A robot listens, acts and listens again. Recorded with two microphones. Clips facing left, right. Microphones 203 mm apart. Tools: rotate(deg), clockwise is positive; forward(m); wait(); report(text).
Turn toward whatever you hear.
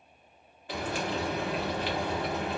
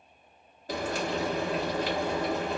rotate(40)
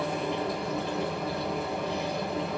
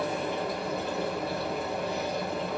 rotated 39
report("Facing the frying.")